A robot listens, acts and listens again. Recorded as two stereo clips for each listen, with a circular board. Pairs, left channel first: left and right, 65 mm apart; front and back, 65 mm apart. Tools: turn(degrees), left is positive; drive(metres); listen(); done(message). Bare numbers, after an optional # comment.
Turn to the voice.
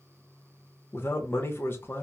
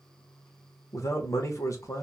# The man speaking: 35° left.
turn(35)
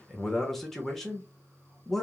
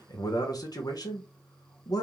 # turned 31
done("Found it: a man speaking, straight ahead, under 1 m away.")